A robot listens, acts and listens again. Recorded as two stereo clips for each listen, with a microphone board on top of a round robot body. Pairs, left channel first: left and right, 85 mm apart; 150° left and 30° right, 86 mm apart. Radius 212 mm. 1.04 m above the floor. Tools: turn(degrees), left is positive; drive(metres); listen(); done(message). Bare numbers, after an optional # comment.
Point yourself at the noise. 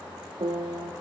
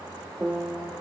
# The piano: 105° right.
turn(-105)
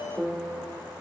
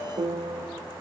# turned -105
# The piano is now 10° right.
turn(-10)
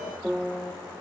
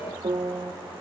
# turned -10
done("Found it: a piano, straight ahead, 1 to 2 m away.")